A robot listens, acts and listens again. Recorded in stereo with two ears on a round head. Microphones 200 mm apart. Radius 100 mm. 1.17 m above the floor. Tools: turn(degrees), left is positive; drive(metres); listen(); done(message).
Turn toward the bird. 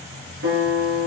listen()
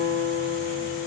listen()
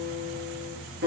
done("I can't make out a bird to turn to.")